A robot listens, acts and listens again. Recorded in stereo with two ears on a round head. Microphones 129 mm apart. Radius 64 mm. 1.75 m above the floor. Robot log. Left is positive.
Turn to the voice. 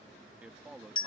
cmd yaw -30
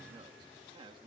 note: So it is at 145° right.
cmd yaw -145
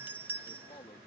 note: The man speaking is now 30° left.
cmd yaw +30
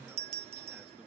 cmd idle
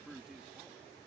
end: Facing the man speaking.